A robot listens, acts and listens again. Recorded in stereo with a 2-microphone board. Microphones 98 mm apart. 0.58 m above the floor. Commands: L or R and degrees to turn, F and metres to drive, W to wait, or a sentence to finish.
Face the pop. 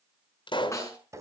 L55
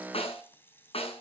W
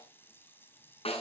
I heard a pop, but can't make it out now. It was about straight ahead or 70° left.